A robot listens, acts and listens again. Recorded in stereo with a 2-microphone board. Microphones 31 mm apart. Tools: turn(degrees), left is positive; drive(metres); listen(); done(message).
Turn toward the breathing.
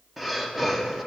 turn(degrees=-30)
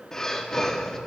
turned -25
turn(degrees=15)
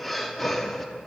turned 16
done("Facing the breathing, 1 to 2 m away.")